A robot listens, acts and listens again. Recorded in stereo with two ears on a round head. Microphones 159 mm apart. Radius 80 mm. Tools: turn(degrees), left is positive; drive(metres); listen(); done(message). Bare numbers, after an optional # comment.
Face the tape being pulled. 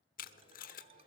# The tape being pulled: about 50° left or 130° left.
turn(50)
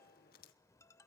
listen()
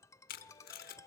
# So it is at 65° left.
turn(65)
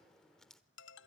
done("Facing the tape being pulled.")